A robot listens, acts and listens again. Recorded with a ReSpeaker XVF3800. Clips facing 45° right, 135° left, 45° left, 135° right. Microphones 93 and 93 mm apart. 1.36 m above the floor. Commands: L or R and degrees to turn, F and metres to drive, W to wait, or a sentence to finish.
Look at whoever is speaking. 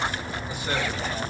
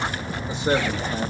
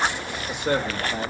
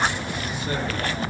L70
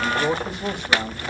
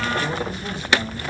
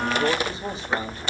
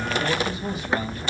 R15
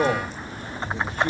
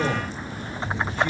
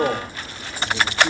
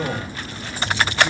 Found it: a man speaking, straight ahead.